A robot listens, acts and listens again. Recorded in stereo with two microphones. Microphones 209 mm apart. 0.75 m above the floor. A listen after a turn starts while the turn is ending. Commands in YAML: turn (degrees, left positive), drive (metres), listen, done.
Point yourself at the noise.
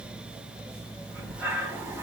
turn: -30
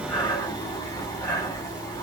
turn: 15
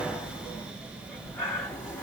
done: "Found it: breathing, straight ahead, 2 to 4 m away."